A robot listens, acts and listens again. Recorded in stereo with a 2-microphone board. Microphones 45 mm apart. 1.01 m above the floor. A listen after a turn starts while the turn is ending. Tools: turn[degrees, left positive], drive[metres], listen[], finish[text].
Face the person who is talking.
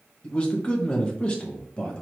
Thought: The man speaking: about 20° left or 160° left.
Action: turn[20]
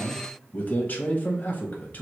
Thought: So it is at 135° left.
Action: turn[135]
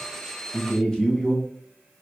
Thought: The man speaking is now 20° left.
Action: turn[20]
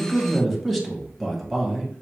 Action: finish[Found it: a man speaking, straight ahead, 1 to 2 m away.]